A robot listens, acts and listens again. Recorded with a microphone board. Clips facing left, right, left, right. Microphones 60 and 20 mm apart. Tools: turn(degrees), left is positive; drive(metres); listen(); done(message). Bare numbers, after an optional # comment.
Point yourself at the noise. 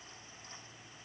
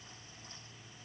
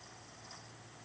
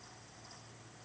listen()
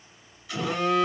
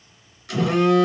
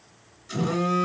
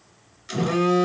# The phone buzzing: about 70° right or 110° right.
turn(-70)
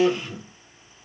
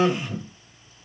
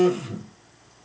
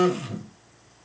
# So it is at 40° right.
turn(-40)
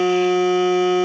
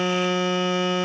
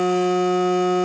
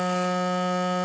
# The phone buzzing is now 15° left.
turn(15)
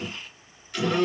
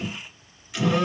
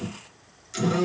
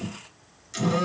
done("Facing the phone buzzing, 1 to 2 m away.")